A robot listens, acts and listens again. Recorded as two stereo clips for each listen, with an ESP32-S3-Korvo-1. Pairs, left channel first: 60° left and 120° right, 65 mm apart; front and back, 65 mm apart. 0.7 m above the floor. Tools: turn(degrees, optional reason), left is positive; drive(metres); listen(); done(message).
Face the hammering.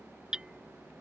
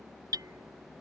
turn(degrees=160, reason="The hammering: 160° left.")
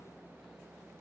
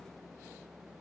listen()
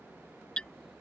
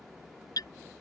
turn(degrees=-15, reason="The hammering is now 15° right.")
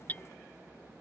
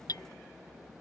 done("Facing the hammering.")